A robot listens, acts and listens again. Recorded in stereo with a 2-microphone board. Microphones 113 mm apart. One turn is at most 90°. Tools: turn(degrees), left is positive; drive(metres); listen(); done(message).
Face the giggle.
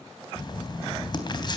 listen()
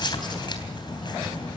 listen()
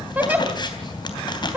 turn(degrees=-30)
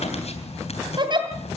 turn(degrees=-90)
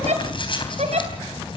turn(degrees=-75)
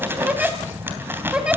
turn(degrees=-10)
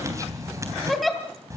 done("Facing the giggle.")